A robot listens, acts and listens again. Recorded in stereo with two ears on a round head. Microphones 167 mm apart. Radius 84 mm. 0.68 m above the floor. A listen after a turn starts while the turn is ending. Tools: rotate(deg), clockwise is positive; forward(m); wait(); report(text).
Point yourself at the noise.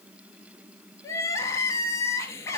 rotate(-15)
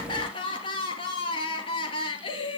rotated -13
rotate(-150)
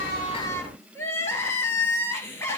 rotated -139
rotate(-15)
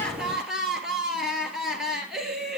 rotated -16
report("Facing the crying, 1 to 2 m away.")